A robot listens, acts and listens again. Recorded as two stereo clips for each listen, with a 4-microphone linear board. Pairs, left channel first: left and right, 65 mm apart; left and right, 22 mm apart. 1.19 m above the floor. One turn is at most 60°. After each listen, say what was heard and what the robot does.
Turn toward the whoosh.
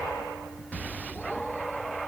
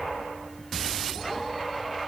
Keep listening.
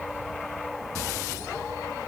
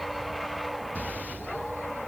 Keep listening.
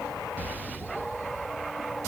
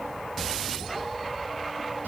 I can't make out a whoosh.